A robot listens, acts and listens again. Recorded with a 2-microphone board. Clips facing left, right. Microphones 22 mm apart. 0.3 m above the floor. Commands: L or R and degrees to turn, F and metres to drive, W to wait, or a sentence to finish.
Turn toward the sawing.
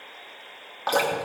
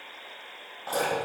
W
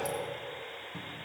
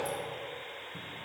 W
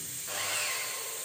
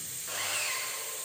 R30
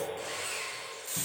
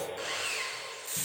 R145
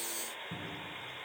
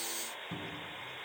W
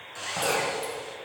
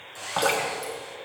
L20
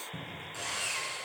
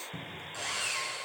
Facing the sawing.